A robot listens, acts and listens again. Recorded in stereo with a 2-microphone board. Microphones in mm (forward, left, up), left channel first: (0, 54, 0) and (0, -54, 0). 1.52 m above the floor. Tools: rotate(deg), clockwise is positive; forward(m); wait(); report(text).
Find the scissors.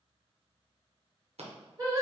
rotate(75)
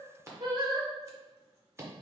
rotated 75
rotate(25)
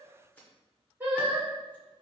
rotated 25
wait()
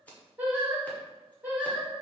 rotate(-15)
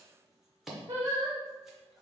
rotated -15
report("Facing the scissors, 1 to 2 m away.")